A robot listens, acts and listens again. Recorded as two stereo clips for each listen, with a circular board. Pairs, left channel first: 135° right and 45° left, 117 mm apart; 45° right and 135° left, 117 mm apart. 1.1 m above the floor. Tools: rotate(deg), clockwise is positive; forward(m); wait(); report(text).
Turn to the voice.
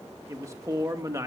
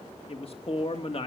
rotate(15)
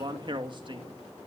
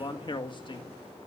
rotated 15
report("Found it: a man speaking, straight ahead.")